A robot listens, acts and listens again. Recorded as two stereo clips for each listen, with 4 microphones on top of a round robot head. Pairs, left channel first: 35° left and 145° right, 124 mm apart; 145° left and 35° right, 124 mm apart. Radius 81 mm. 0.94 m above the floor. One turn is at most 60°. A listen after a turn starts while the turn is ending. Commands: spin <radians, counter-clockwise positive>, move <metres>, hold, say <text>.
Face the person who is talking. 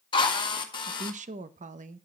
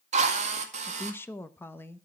spin -1.05
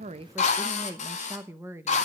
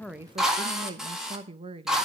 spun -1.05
spin -1.05
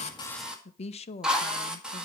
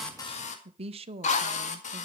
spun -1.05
say Found it: a woman speaking, straight ahead, under 1 m away.